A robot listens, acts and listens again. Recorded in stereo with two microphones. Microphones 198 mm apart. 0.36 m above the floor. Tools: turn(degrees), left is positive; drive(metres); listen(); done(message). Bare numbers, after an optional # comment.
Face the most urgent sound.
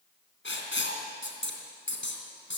listen()
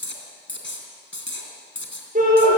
# The shout: about 45° right or 135° right.
turn(-45)
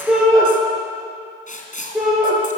done("Found it: a shout, straight ahead.")